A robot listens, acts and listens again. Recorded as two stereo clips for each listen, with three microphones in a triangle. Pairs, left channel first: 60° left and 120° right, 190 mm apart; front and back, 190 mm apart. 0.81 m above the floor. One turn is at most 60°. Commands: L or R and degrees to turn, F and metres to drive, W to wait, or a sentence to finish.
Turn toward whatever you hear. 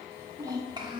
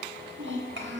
L60
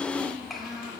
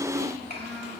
L60
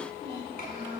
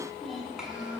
L60
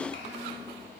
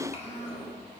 L55
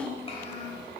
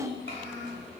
Found it: a child speaking, straight ahead, 2 to 4 m away.